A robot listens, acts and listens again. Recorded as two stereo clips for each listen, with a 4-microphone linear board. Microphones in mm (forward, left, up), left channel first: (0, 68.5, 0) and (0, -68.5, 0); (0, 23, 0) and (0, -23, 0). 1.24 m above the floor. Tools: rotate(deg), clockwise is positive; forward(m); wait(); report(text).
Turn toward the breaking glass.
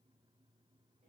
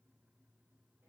wait()
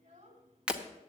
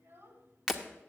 rotate(30)
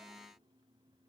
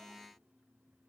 wait()
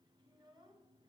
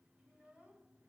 report("I heard breaking glass, but can't make it out now. It was about 25° left or 145° right.")